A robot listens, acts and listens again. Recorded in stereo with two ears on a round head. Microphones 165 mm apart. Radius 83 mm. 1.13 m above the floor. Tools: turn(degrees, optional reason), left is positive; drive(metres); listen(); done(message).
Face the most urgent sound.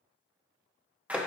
listen()
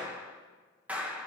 listen()
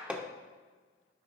done("I can't make out anything urgent, only hammering and a clap.")